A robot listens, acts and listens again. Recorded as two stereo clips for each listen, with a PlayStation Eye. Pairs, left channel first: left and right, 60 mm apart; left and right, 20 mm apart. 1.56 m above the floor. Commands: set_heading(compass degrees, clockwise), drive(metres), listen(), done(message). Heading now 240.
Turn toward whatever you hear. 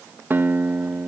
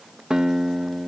set_heading(275)
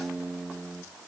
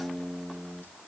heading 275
done("Facing the guitar, 1 to 2 m away.")